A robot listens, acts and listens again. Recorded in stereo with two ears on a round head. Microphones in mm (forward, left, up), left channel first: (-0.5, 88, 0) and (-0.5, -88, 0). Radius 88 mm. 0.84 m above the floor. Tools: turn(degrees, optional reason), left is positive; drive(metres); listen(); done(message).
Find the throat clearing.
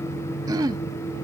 turn(degrees=-20, reason="The throat clearing: about 20° right or 160° right.")
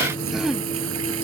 done("Found it: throat clearing, straight ahead.")